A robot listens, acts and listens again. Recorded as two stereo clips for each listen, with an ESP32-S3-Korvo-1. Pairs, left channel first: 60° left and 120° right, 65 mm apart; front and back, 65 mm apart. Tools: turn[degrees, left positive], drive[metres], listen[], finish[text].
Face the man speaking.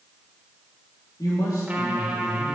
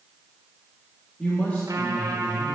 Thought: The man speaking: 65° left.
Action: turn[65]
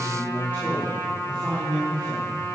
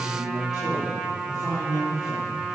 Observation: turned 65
Thought: The man speaking is now 10° right.
Action: turn[-10]
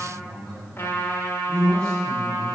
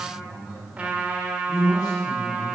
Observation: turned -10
Thought: The man speaking is now 10° right.
Action: turn[-10]
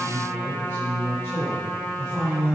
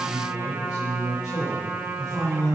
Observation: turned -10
Action: finish[Found it: a man speaking, straight ahead, over 4 m away.]